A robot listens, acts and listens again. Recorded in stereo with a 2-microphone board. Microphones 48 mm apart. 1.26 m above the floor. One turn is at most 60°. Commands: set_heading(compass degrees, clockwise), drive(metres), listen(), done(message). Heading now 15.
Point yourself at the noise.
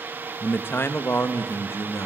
set_heading(315)
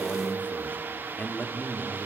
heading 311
set_heading(281)
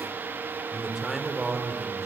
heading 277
done("Found it: a man speaking, straight ahead, over 4 m away.")